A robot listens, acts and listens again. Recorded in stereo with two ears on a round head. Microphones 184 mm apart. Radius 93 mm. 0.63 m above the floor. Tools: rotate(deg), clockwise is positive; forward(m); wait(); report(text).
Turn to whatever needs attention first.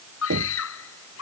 rotate(-90)
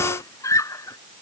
rotate(-15)
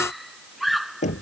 report("Facing the scream.")